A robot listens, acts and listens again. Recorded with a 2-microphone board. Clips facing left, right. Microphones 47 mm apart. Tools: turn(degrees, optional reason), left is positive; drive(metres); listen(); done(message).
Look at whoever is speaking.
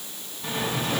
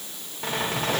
listen()
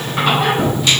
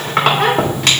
listen()
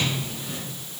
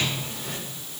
done("I can't make out anyone speaking, only a squeak.")